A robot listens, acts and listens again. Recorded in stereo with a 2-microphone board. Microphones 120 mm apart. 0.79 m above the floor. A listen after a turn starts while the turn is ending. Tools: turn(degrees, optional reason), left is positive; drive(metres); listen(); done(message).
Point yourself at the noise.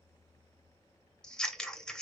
turn(degrees=30)
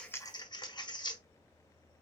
turn(degrees=140, reason="So it is at 140° left.")
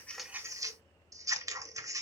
turn(degrees=-25, reason="The scissors is now 25° right.")
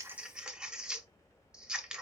done("Found it: scissors, straight ahead.")